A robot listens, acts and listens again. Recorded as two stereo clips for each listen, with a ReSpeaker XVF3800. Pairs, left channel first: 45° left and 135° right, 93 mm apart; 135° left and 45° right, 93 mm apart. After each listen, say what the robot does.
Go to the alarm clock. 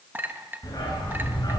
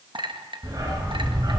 Keep listening.
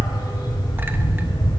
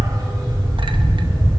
Keep listening.
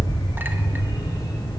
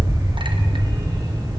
I can't make out an alarm clock to turn to.